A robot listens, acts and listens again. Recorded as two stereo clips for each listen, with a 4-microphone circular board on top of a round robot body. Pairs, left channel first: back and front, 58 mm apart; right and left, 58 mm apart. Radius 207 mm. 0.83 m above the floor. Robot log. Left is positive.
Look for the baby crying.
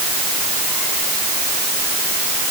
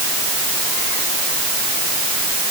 cmd idle
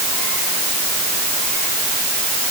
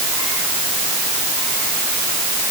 cmd idle
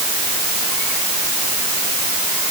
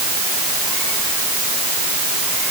end: I can't make out a baby crying.